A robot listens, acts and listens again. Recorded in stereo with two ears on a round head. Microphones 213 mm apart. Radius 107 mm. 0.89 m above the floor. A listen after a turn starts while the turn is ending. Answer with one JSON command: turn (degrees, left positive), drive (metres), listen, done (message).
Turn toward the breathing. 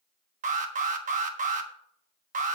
{"listen": true}
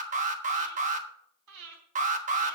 {"turn": -90}
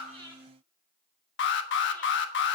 {"listen": true}
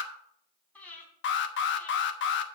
{"done": "Found it: breathing, straight ahead."}